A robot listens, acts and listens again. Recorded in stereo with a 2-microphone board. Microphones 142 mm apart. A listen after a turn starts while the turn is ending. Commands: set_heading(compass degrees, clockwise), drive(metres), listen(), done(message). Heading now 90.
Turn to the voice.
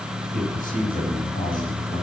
set_heading(0)
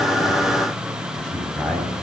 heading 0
done("Facing the man speaking.")